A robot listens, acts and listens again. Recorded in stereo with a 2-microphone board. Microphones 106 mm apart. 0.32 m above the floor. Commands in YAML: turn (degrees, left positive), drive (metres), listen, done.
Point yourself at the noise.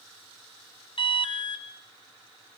turn: 60
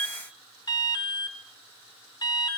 turn: 50
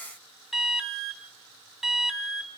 done: "Found it: an alarm, straight ahead, 2 to 4 m away."